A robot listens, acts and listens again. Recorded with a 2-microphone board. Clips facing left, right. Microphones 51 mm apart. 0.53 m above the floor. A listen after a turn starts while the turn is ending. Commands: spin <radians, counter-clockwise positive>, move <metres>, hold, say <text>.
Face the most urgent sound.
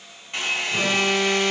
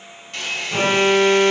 spin -0.70
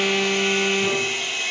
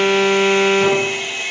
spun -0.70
spin -1.75
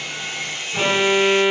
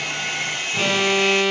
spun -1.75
spin 0.35
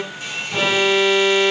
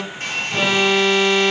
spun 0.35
say Facing the alarm, 1 to 2 m away.